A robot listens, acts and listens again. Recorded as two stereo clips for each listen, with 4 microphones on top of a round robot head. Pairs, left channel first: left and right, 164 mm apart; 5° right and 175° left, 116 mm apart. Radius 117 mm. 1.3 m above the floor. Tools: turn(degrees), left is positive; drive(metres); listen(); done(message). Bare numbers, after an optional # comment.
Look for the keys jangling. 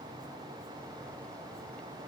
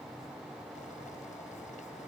listen()
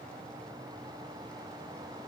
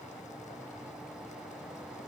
listen()
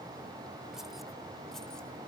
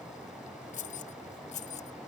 done("Found it: keys jangling, straight ahead.")